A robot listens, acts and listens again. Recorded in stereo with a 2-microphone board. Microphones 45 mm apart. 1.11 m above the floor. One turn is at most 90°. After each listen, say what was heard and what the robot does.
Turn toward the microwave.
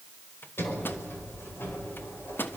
The microwave: about 50° left or 130° left. Turn 50° left.
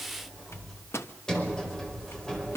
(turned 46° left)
So it is at 85° left. Turn 85° left.
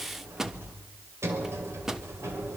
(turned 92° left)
The microwave is now 10° right. Turn 10° right.
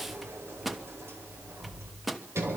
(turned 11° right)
Found it: a microwave, straight ahead.